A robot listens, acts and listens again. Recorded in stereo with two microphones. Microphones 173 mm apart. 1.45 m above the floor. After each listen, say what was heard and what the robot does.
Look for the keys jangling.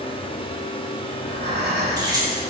The keys jangling: about 25° right or 155° right. Turn 25° right.
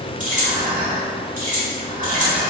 So it is at 130° right. Turn 130° right.
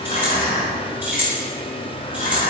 The keys jangling is now 10° right. Turn 10° right.
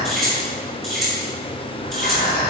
Facing the keys jangling, over 4 m away.